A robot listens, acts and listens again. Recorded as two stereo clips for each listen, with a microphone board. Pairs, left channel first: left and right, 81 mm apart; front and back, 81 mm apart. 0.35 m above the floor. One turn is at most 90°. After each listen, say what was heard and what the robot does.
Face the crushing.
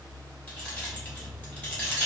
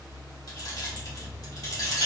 Keep listening.
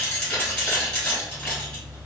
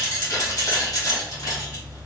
Keep listening.
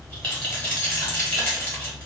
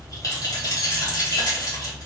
I can't make out crushing to turn to.